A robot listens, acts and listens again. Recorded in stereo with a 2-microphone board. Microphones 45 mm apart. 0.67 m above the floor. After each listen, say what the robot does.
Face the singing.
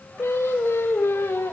Turn 90° left.
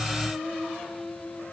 Facing the singing, 2 to 4 m away.